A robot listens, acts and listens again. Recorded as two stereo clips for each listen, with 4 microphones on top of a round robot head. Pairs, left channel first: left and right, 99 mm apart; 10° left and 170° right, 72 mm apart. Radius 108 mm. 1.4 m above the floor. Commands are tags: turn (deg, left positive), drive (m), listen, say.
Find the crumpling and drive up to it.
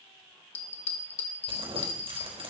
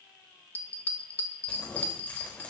<turn deg="-65"/>
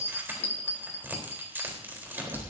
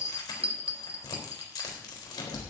<turn deg="-20"/>
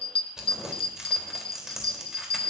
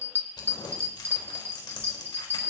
<drive m="1.0"/>
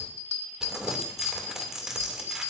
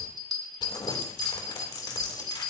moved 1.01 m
<drive m="1.0"/>
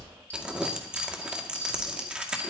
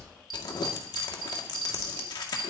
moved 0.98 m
<turn deg="-10"/>
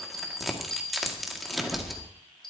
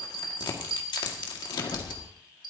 <drive m="1.0"/>
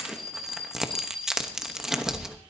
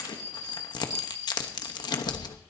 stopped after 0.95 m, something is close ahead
<say>Arrived at the crumpling, straight ahead.</say>